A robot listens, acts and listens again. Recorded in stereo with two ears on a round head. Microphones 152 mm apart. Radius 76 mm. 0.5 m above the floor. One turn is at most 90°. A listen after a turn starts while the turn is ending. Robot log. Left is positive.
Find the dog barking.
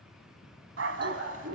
cmd yaw -90
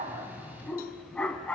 end: Found it: a dog barking, straight ahead.